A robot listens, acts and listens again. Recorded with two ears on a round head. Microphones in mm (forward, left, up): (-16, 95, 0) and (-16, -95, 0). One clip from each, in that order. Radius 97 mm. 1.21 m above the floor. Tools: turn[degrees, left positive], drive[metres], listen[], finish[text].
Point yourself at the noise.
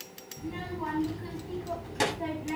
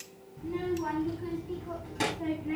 Thought: The child speaking: about 30° left or 150° left.
Action: turn[30]
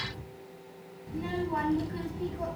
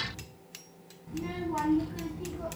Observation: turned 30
Thought: So it is at 130° left.
Action: turn[130]
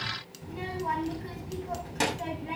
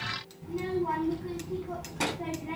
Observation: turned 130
Thought: The child speaking is now 55° left.
Action: turn[55]
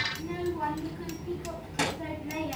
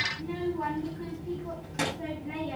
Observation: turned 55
Thought: The child speaking is now 10° left.
Action: turn[10]
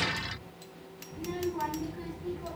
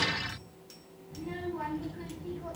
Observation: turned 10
Action: finish[Found it: a child speaking, straight ahead, over 4 m away.]